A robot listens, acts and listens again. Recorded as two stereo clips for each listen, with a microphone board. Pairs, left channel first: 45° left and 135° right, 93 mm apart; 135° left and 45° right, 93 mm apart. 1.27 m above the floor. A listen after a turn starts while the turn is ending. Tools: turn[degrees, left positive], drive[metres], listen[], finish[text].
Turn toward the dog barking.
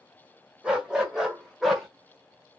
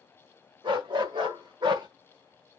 Thought: The dog barking: 45° right.
Action: turn[-45]
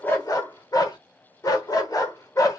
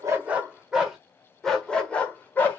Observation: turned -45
Thought: The dog barking is now 75° left.
Action: turn[75]
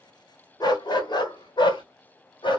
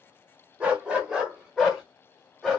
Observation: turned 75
Thought: The dog barking is now 45° left.
Action: turn[45]
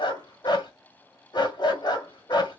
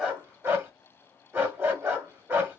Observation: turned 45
Thought: The dog barking is now 20° left.
Action: turn[20]
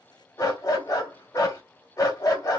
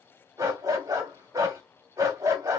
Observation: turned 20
Action: finish[Found it: a dog barking, straight ahead, 1 to 2 m away.]